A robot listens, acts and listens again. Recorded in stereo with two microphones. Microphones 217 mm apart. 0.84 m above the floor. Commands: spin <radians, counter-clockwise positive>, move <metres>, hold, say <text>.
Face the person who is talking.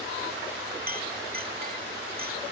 hold
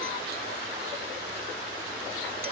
hold
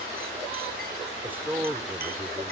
spin -0.52
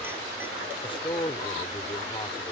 spin 0.44
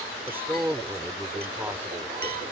spin -0.17
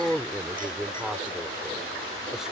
say Facing the man speaking.